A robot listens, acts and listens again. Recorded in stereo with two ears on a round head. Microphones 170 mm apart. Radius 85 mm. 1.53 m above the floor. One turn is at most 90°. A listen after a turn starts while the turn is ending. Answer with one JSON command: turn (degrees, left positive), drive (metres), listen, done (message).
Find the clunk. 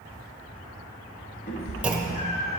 {"turn": -30}
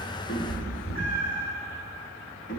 {"listen": true}
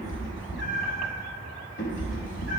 {"done": "I heard a clunk, but can't make it out now. It was about 25° left or 145° right."}